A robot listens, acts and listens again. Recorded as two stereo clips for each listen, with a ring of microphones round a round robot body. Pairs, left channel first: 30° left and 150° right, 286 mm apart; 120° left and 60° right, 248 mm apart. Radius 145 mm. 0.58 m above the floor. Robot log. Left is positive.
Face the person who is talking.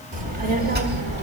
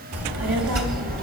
note: The child speaking: 100° right.
cmd yaw -100
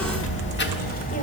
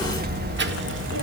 note: The child speaking is now 35° right.
cmd yaw -35
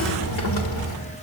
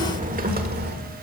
note: The child speaking is now 15° right.
cmd yaw -15
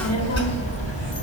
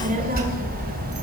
note: The child speaking is now 15° right.
cmd yaw -15
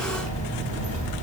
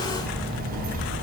note: The child speaking is now 10° right.
cmd yaw -10
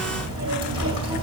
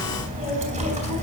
end: Facing the child speaking.